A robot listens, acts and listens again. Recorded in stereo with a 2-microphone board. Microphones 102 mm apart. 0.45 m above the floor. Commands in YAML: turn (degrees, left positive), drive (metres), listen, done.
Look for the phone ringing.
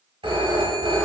turn: -60
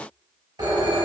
turn: -50
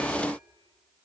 listen: true
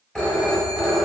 turn: 10
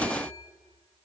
listen: true
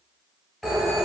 done: "Found it: a phone ringing, straight ahead, 1 to 2 m away."